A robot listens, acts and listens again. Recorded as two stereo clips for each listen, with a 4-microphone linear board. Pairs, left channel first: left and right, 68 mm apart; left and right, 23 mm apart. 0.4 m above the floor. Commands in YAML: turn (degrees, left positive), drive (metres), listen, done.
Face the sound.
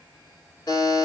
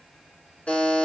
turn: 90
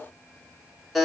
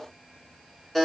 done: "Found it: a buzzer, straight ahead."